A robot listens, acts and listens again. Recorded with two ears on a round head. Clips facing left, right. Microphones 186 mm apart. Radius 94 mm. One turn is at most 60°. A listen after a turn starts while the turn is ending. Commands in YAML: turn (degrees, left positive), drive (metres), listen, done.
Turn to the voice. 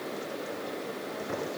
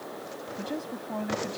turn: -60
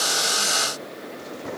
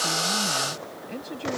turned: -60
turn: -45
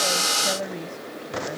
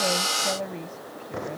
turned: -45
turn: 10
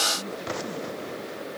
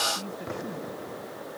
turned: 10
done: "Found it: a woman speaking, straight ahead."